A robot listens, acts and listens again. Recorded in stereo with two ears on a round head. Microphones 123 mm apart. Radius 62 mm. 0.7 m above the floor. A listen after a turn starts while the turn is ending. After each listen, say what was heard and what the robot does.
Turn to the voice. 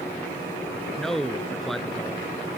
Turn 30° left.
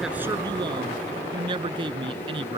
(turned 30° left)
So it is at 35° right. Turn 35° right.
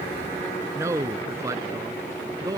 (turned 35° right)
The man speaking is now 25° right. Turn 25° right.
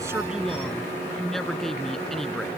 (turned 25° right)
Found it: a man speaking, straight ahead.